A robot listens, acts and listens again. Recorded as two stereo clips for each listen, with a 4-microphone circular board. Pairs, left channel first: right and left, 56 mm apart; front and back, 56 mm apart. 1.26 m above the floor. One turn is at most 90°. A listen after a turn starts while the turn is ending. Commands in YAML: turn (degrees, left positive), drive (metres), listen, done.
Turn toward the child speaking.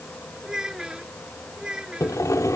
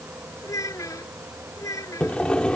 turn: 15
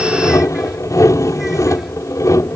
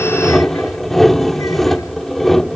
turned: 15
listen: true
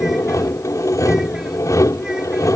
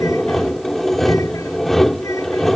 listen: true
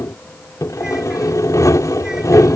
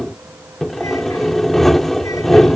done: "I heard a child speaking from this way, but can't make it out now."